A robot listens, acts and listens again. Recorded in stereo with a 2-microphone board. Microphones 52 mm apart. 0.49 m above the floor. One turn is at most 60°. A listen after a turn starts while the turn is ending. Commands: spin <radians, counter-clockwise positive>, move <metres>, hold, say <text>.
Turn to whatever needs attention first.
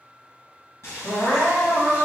spin 1.05
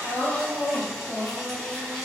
spin 0.70
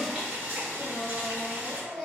say Found it: crying, straight ahead, 1 to 2 m away.